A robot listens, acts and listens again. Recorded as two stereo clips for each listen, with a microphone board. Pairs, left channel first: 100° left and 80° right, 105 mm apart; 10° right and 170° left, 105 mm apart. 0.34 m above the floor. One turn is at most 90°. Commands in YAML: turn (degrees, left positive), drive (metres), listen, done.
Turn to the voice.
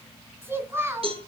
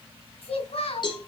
turn: -15
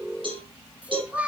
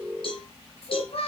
done: "Facing the child speaking."